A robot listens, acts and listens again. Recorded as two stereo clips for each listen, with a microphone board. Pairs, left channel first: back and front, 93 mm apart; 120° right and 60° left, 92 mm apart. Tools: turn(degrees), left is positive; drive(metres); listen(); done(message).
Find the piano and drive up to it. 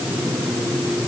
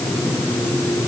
listen()
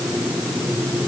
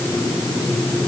listen()
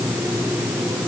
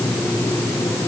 done("I can't make out a piano to turn to.")